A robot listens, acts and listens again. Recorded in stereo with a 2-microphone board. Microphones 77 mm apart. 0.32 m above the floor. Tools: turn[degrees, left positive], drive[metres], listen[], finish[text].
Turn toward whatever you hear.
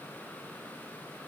Action: listen[]
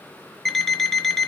Action: turn[30]
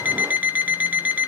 Thought: So it is at 25° right.
Action: turn[-25]
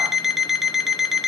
Action: finish[Found it: an alarm clock, straight ahead.]